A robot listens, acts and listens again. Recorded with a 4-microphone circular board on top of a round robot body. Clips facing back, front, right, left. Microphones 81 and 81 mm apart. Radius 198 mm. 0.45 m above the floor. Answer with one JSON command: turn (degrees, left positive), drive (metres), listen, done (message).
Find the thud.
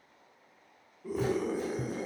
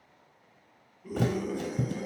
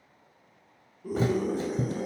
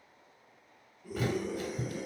{"turn": -30}
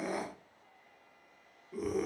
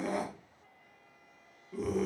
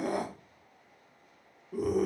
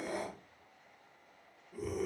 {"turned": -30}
{"done": "Facing where the thud came from. I can't hear it now."}